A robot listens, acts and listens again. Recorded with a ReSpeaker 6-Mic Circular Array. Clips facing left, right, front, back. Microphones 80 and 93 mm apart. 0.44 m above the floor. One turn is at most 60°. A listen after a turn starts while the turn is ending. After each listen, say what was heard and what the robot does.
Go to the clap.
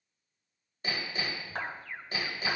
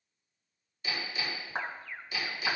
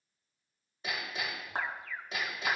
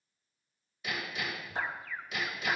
The clap: 20° right. Turn 20° right.
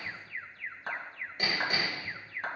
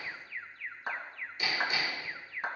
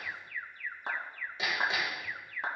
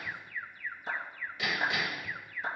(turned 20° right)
The clap is now 10° right. Turn 10° right.
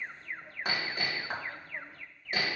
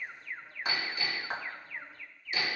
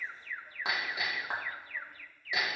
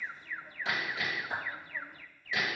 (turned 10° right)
Drive 1.0 m forward.
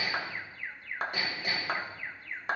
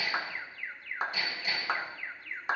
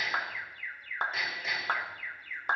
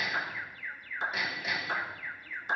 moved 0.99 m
Drive 1.0 m forward.
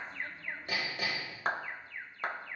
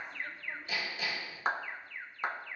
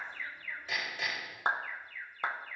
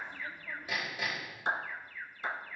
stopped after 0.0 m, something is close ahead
Arrived at the clap, straight ahead.